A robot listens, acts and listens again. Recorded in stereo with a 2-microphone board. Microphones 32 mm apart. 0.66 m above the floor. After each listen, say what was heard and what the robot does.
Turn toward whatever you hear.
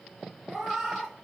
Turn 30° right.
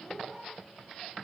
So it is at 30° left. Turn 30° left.
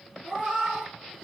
Found it: a cat meowing, straight ahead, 2 to 4 m away.